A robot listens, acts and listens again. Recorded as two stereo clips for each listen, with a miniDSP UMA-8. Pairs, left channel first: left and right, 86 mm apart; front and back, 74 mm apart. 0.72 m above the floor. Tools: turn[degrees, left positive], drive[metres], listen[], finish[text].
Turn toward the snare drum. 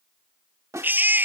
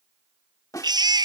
Thought: The snare drum: 40° right.
Action: turn[-40]
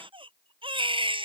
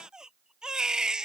Action: listen[]
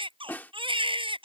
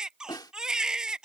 Thought: The snare drum is now 20° left.
Action: turn[20]
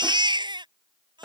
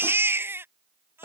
Action: finish[Facing the snare drum.]